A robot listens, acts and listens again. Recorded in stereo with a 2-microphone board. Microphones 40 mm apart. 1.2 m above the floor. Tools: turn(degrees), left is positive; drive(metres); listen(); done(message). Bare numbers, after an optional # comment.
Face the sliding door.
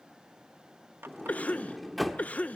turn(30)
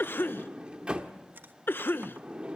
# So it is at 30° right.
turn(-30)
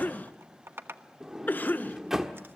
# The sliding door is now 10° right.
turn(-10)
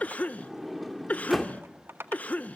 done("Found it: a sliding door, straight ahead, 1 to 2 m away.")